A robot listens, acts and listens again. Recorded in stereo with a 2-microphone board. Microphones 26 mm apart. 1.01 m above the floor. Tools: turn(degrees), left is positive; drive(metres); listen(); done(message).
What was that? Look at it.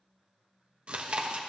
turn(degrees=-40)
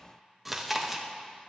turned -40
done("Facing the chewing, under 1 m away.")